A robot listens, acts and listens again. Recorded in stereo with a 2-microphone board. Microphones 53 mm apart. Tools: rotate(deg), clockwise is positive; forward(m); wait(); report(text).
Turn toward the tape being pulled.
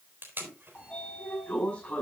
rotate(45)
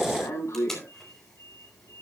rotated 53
rotate(-10)
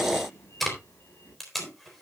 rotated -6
report("Facing the tape being pulled, 2 to 4 m away.")